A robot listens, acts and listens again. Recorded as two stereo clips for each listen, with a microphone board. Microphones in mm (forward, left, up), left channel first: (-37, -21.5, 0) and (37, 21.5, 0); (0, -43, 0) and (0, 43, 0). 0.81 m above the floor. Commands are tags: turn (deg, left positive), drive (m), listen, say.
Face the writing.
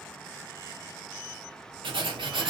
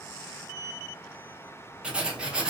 <turn deg="10"/>
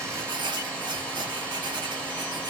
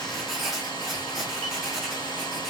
<say>Found it: writing, straight ahead, under 1 m away.</say>